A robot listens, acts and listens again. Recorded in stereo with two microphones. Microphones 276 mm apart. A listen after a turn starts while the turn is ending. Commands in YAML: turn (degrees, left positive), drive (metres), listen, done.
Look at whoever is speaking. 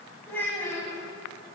turn: 30
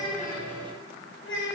turn: 135
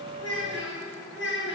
turn: 45
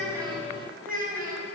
turn: -30
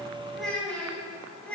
done: "Found it: a child speaking, straight ahead, over 4 m away."